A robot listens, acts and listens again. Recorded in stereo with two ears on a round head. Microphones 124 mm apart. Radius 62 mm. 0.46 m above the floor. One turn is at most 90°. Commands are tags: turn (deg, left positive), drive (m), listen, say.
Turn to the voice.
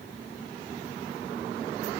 <listen/>
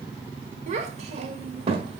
<turn deg="-40"/>
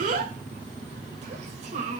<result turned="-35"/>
<turn deg="-50"/>
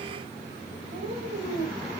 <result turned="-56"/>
<turn deg="-65"/>
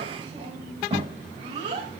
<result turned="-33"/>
<turn deg="-40"/>
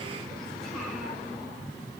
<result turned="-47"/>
<turn deg="10"/>
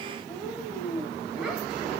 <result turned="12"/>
<say>Facing the child speaking, 2 to 4 m away.</say>